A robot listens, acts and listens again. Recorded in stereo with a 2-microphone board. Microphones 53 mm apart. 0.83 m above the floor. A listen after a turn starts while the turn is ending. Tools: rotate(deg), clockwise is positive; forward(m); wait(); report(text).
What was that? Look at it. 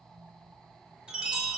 rotate(20)
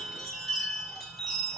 report("Found it: a chime, straight ahead.")